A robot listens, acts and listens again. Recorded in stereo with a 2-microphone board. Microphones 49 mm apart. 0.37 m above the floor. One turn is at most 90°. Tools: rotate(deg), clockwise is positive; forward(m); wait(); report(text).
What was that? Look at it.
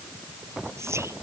rotate(90)
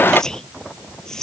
rotate(-15)
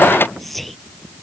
report("Found it: whispering, straight ahead.")